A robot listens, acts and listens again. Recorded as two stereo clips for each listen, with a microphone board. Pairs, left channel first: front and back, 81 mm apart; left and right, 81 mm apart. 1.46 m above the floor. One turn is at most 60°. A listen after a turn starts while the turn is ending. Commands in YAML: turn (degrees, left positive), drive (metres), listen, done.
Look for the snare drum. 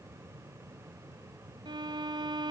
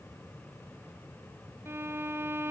listen: true
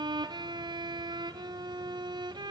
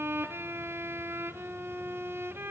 listen: true
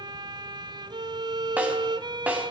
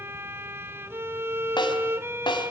turn: 60
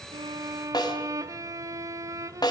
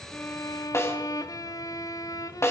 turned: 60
turn: 35
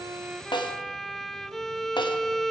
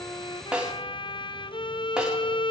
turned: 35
turn: -10
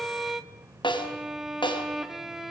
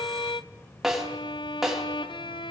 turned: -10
done: "Facing the snare drum, over 4 m away."